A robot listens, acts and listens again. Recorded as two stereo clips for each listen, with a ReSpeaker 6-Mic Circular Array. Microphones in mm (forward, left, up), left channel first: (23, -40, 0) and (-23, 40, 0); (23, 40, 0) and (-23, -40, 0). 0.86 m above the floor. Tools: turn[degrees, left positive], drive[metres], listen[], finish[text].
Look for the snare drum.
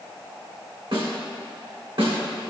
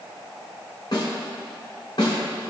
Thought: The snare drum: 100° left.
Action: turn[100]
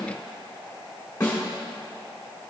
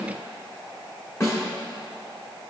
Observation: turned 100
Action: finish[Found it: a snare drum, straight ahead, 1 to 2 m away.]